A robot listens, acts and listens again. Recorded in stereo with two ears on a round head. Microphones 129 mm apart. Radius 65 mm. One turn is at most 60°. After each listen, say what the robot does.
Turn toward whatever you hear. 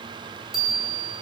Turn 30° left.
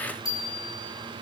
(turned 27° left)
Turn 60° left.
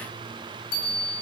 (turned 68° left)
Turn 60° left.
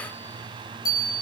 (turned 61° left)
Turn 30° left.
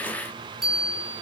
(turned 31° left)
Facing the bicycle bell, over 4 m away.